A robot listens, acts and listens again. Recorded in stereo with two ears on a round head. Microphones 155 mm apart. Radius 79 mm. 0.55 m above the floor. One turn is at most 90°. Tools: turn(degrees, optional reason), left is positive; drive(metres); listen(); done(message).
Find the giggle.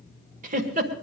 turn(degrees=-45, reason="The giggle: about 45° right or 135° right.")
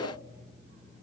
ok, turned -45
listen()
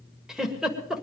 done("Found it: a giggle, straight ahead, 1 to 2 m away.")